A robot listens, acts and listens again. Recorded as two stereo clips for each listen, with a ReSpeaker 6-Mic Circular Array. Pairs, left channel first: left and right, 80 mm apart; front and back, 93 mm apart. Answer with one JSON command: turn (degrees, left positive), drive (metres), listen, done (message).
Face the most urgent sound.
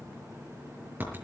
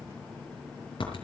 {"listen": true}
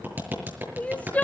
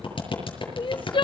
{"turn": 20}
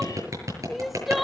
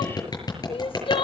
{"done": "Facing the crying, under 1 m away."}